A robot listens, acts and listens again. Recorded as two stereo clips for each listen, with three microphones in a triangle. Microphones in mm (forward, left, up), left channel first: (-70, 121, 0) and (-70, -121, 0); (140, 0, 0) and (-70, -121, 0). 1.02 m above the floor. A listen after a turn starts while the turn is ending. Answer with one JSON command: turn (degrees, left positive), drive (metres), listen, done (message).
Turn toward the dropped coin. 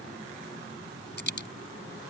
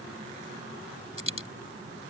{"turn": 50}
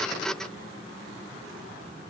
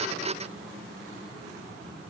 {"done": "Facing where the dropped coin came from. I can't hear it now."}